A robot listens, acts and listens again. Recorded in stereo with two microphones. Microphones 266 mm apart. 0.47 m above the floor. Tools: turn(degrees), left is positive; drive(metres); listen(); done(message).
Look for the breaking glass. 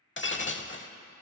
turn(degrees=45)
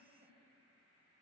listen()
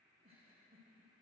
done("I heard breaking glass, but can't make it out now. It was about straight ahead or 90° left.")